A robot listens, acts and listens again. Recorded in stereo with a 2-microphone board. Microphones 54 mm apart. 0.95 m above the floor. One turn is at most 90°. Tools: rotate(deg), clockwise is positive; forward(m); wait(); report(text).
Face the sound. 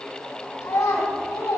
rotate(-90)
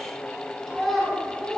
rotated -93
report("Facing the child speaking.")